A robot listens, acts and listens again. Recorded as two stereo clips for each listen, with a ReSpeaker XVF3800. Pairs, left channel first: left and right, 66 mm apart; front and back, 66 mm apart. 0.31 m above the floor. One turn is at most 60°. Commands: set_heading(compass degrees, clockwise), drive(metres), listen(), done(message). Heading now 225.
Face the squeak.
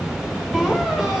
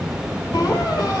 set_heading(235)
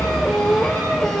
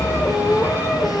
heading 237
done("Found it: a squeak, straight ahead.")